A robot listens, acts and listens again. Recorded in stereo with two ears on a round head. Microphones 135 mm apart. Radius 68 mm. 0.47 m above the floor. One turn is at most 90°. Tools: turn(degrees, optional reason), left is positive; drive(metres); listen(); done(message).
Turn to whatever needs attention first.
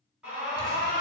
turn(degrees=-30)
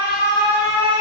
turn(degrees=-90, reason="So it is at 140° right.")
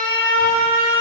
turn(degrees=-30, reason="The alarm is now 30° right.")
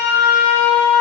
turn(degrees=-15, reason="The alarm is now 15° right.")
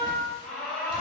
done("Found it: an alarm, straight ahead, 1 to 2 m away.")